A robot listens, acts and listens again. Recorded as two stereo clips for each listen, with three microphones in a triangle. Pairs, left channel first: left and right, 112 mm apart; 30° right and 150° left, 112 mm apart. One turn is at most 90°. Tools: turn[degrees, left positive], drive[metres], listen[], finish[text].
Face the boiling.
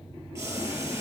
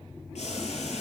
Thought: The boiling: 25° right.
Action: turn[-25]
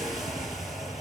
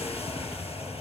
Action: listen[]
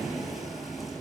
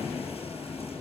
Action: listen[]
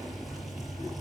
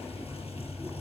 Action: finish[Facing where the boiling came from. I can't hear it now.]